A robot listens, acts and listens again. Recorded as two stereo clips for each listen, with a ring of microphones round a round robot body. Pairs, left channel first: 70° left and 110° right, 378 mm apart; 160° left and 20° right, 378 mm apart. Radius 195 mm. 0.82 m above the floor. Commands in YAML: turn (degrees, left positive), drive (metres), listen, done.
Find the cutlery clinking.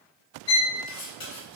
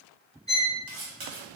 turn: 15
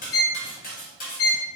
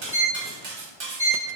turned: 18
done: "Found it: cutlery clinking, straight ahead, 1 to 2 m away."